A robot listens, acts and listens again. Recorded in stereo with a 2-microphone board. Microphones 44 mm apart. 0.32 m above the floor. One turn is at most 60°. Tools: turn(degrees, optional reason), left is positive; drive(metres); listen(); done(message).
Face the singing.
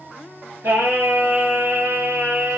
turn(degrees=-60)
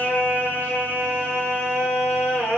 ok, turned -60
turn(degrees=-60, reason="So it is at 70° right.")
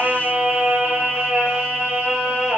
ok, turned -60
turn(degrees=-30, reason="The singing is now 30° right.")
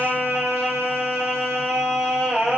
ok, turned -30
turn(degrees=-15, reason="The singing is now 15° right.")
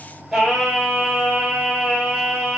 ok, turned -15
done("Facing the singing.")